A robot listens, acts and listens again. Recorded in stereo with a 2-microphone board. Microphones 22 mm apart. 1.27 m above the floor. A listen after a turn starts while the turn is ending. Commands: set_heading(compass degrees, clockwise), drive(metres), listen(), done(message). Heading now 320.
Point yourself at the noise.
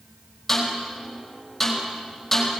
set_heading(290)
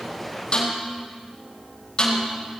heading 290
set_heading(155)
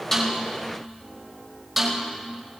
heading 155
done("Facing the snare drum.")